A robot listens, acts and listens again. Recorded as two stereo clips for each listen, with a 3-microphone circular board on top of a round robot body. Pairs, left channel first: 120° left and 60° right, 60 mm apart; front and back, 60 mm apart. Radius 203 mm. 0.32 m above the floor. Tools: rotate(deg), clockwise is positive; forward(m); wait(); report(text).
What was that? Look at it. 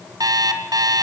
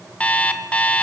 rotate(70)
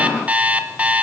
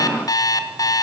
report("Facing the alarm clock, 2 to 4 m away.")